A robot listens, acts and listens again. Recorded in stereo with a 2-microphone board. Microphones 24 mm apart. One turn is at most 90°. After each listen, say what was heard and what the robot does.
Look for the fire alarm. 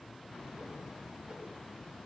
Keep listening.
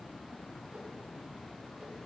Keep listening.
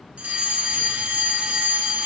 The fire alarm: about 55° right or 125° right. Turn 55° right.
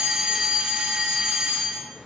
So it is at 40° right. Turn 40° right.
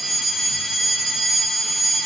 Facing the fire alarm.